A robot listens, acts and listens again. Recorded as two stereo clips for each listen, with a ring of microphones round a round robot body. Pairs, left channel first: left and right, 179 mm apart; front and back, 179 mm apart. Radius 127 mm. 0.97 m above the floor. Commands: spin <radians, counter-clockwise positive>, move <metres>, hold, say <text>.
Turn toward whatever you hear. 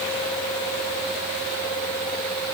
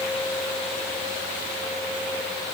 hold
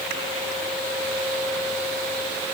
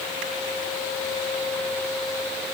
hold
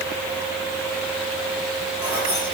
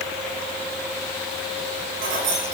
spin -2.88
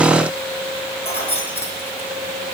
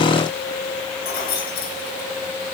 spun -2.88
spin 0.61
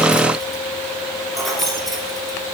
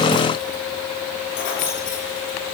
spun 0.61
say Found it: keys jangling, straight ahead, over 4 m away.